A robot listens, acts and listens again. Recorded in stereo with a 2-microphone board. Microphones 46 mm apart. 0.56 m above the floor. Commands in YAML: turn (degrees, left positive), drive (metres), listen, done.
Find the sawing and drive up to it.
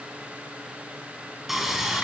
turn: -30
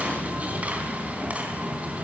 turn: -145
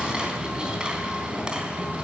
turn: -20
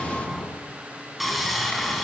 drive: 1.0
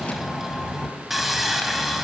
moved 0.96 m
drive: 1.0
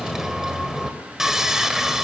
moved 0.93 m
turn: -10
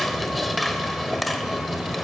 drive: 1.0
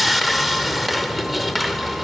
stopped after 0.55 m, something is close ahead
done: "I am next to the sawing."